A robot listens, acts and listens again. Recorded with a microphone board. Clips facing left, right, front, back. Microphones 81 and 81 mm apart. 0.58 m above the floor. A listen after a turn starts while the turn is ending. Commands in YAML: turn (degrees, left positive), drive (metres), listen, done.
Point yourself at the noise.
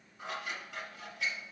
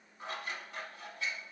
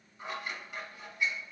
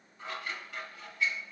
turn: 75
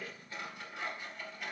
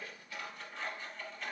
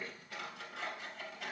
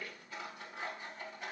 turn: 10
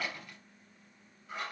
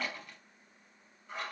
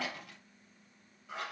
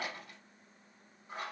done: "Found it: scissors, straight ahead."